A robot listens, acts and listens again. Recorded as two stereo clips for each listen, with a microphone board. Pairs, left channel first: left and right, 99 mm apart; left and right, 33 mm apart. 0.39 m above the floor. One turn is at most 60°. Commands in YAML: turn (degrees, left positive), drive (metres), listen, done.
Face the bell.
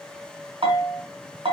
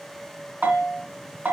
turn: -60
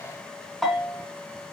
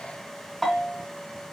done: "Found it: a bell, straight ahead."